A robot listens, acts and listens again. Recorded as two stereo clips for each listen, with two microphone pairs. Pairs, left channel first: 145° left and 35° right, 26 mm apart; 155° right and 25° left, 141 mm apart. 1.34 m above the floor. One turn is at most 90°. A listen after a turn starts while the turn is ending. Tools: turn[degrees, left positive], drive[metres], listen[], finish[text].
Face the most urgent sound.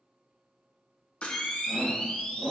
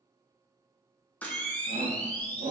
Thought: The shout: 15° left.
Action: turn[15]
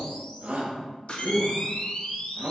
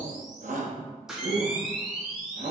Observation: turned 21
Action: finish[Found it: a shout, straight ahead.]